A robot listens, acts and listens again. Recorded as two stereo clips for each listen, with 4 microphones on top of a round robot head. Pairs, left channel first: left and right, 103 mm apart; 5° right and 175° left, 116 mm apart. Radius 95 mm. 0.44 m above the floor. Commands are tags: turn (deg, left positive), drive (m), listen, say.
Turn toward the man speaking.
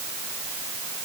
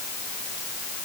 <listen/>
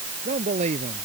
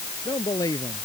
<turn deg="-70"/>
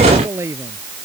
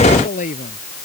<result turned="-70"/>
<turn deg="-20"/>
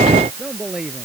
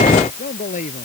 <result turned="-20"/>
<say>Facing the man speaking.</say>